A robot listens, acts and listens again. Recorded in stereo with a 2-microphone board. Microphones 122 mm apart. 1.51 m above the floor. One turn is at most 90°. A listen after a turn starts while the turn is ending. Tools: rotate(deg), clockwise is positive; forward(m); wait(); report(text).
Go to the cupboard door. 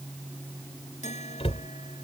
rotate(-60)
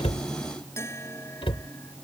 rotate(-55)
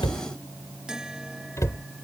rotate(-30)
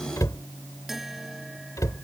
rotate(-30)
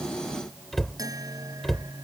forward(1.0)
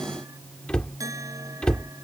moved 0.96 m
rotate(-10)
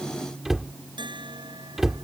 forward(1.0)
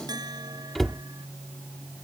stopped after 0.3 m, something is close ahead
report("I am next to the cupboard door.")